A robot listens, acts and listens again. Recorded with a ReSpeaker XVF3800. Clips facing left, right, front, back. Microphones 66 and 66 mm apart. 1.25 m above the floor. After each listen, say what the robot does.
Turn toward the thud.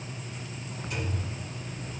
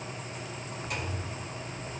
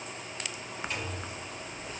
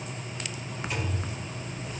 Turn 100° right.
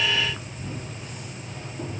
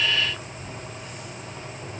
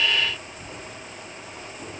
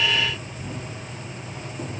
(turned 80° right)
Turn 20° right.
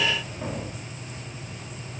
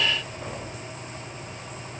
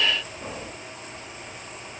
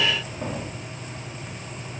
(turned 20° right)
Facing where the thud came from. I can't hear it now.